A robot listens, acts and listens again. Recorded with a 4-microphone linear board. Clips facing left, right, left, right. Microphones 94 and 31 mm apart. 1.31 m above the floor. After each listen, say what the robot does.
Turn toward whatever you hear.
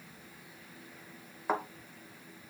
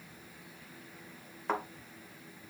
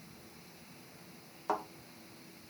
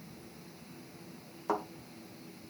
Turn 30° left.
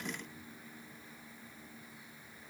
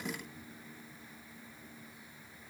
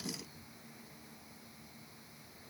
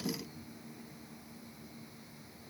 Keep listening.
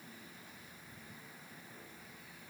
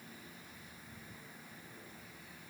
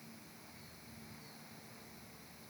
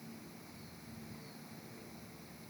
I heard a thud, but can't make it out now. It was about 20° right or 140° left.